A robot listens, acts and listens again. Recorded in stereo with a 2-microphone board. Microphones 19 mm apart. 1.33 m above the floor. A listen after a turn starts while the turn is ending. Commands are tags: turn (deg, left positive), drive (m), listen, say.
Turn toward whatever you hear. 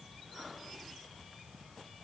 <listen/>
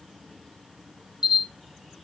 <turn deg="-45"/>
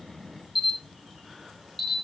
<say>Facing the camera shutter, 1 to 2 m away.</say>